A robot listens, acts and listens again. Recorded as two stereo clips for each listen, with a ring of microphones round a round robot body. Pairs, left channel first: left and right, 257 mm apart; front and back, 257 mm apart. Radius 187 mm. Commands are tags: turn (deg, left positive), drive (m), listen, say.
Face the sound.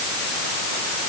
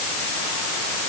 <listen/>
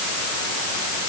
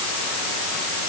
<listen/>
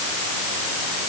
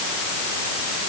<say>I can't make out anything to turn to.</say>